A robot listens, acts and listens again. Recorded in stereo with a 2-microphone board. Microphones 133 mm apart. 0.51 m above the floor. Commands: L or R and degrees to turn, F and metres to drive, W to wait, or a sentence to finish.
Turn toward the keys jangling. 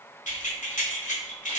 L70
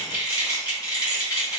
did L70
L30
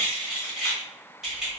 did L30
Found it: keys jangling, straight ahead, 1 to 2 m away.